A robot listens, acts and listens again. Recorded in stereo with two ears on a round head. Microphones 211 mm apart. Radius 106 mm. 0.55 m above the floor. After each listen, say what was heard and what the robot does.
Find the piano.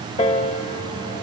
The piano: about 25° left or 155° left. Turn 25° left.
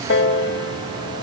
So it is at 130° left. Turn 130° left.
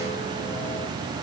Keep listening.
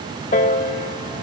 The piano is now 30° left. Turn 30° left.
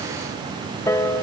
The piano is now 15° left. Turn 15° left.
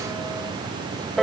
Found it: a piano, straight ahead.